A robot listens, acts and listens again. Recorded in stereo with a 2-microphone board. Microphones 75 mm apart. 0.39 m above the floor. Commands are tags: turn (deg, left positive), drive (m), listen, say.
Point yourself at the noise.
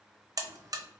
<turn deg="-50"/>
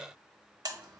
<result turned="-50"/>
<turn deg="-65"/>
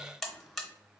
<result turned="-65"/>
<say>Facing the buzzer, under 1 m away.</say>